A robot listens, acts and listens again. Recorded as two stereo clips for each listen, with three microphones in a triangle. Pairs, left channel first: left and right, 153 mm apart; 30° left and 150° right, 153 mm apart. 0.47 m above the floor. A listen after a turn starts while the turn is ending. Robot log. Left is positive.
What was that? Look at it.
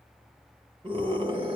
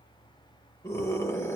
note: The scream: 40° right.
cmd yaw -40
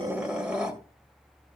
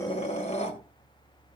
end: Facing the scream.